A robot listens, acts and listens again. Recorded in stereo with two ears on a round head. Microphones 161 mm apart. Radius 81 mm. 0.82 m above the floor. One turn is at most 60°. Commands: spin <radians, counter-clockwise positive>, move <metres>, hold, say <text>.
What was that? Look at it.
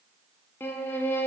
spin 0.52
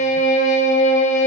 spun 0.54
spin 1.05
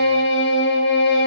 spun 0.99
spin 1.05
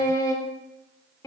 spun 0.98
spin 0.35
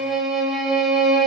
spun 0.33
say Facing the violin.